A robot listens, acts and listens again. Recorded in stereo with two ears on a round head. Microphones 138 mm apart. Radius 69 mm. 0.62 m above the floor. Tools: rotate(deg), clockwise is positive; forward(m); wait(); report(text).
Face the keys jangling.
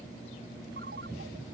wait()
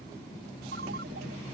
wait()
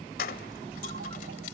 rotate(-65)
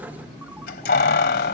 rotate(-70)
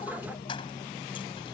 wait()
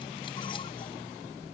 wait()
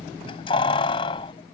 rotate(-35)
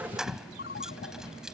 report("Found it: keys jangling, straight ahead.")